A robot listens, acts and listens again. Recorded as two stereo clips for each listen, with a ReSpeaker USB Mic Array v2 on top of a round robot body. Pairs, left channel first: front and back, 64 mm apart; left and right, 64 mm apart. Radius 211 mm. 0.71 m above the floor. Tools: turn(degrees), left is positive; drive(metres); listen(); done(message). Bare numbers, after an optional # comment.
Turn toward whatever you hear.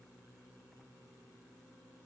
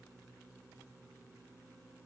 listen()
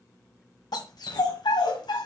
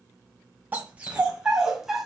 done("Facing the dog barking, 1 to 2 m away.")